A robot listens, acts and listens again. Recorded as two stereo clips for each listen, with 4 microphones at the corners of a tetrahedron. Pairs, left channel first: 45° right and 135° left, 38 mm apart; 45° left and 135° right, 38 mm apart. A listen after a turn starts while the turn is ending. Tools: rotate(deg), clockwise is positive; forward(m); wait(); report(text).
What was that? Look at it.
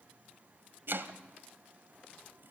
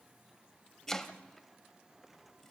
rotate(-120)
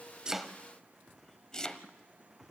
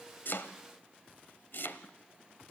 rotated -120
rotate(-25)
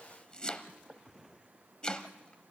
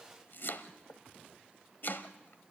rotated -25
rotate(-20)
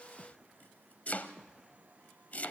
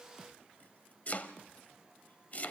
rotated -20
report("Found it: chopping, straight ahead.")